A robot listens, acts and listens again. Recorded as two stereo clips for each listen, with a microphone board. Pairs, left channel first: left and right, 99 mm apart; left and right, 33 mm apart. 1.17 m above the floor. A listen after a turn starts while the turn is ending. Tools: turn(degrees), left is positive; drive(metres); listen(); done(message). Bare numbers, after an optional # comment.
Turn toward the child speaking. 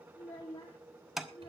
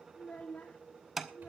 turn(90)
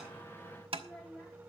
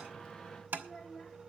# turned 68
# So it is at 10° left.
turn(10)
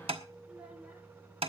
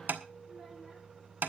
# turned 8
listen()
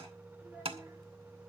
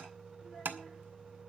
listen()
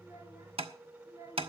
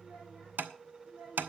# The child speaking is now 30° right.
turn(-30)
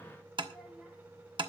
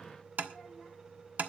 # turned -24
listen()
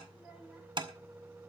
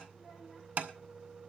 listen()
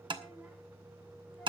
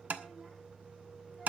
done("I heard a child speaking from this way, but can't make it out now.")